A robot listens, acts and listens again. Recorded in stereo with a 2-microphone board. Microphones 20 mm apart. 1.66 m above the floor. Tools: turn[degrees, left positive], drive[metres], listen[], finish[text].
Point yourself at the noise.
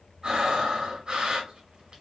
Thought: The breathing: about 50° right or 130° right.
Action: turn[-50]
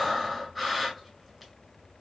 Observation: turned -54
Action: finish[Facing the breathing.]